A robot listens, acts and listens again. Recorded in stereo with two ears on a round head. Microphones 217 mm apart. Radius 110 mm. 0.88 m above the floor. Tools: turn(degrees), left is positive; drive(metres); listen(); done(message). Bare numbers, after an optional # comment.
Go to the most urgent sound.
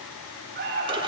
# The alarm: about 40° right or 140° right.
turn(-40)
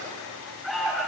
drive(1.0)
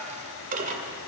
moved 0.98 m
listen()
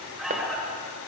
drive(1.0)
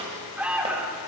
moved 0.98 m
drive(1.0)
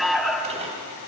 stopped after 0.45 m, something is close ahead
done("Arrived at the alarm, straight ahead.")